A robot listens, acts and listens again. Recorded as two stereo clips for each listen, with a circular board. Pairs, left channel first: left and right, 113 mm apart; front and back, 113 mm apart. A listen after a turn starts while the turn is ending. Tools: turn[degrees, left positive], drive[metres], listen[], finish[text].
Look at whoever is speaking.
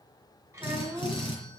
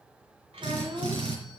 Thought: The child speaking: 155° right.
Action: turn[-155]
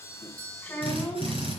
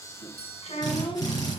Thought: The child speaking is now 15° left.
Action: turn[15]
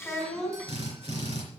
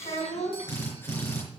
Action: finish[Facing the child speaking, 2 to 4 m away.]